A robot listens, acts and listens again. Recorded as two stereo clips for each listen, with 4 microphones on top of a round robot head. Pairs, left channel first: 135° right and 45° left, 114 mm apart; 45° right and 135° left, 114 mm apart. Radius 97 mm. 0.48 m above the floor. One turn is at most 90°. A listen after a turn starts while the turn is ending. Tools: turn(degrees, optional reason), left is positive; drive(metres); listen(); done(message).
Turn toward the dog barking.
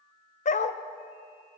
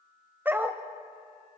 turn(degrees=-90, reason="The dog barking: 150° right.")
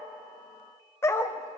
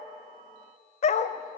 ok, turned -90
turn(degrees=-70, reason="The dog barking is now 70° right.")
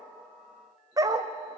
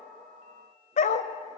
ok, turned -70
turn(degrees=-20, reason="The dog barking is now 20° right.")
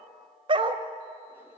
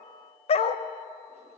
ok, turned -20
done("Found it: a dog barking, straight ahead.")